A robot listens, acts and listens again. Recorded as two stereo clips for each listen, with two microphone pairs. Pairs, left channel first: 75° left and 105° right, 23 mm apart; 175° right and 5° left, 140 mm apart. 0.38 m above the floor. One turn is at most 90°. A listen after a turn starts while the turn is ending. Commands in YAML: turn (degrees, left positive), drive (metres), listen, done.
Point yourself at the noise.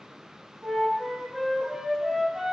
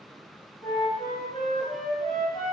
turn: -90
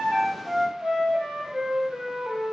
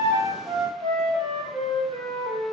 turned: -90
turn: -55
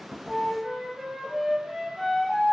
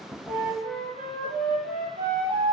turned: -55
turn: -15
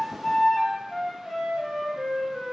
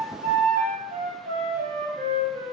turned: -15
done: "Facing the flute."